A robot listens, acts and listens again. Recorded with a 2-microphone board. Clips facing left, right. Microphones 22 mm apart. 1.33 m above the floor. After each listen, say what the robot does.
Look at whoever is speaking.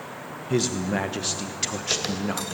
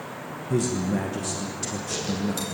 Turn 50° left.
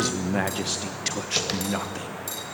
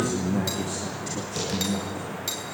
Turn 80° left.
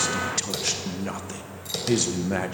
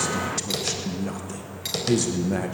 Turn 20° left.
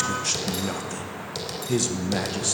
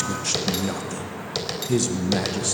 Found it: a man speaking, straight ahead, 1 to 2 m away.